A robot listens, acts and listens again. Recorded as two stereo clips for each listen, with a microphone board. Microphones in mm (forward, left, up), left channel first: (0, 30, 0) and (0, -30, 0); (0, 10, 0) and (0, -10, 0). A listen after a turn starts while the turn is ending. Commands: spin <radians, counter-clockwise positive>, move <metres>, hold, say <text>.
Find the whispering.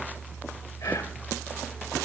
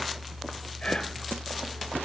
spin 1.22
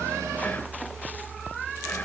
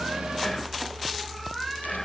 spin 0.44
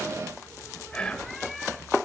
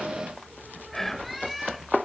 spin 0.26
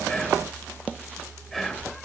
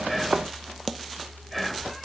say Found it: whispering, straight ahead.